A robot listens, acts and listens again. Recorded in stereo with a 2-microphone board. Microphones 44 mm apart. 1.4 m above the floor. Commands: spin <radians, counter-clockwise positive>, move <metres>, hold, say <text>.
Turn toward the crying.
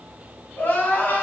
spin 0.79
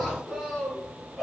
say Found it: crying, straight ahead, 1 to 2 m away.